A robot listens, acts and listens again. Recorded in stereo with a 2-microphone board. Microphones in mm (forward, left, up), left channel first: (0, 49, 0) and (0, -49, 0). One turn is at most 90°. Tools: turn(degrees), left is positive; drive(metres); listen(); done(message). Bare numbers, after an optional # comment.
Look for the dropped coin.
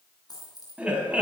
# The dropped coin: about 40° left or 140° left.
turn(40)
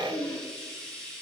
listen()
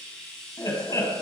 done("I heard a dropped coin, but can't make it out now. It was about straight ahead or 100° left.")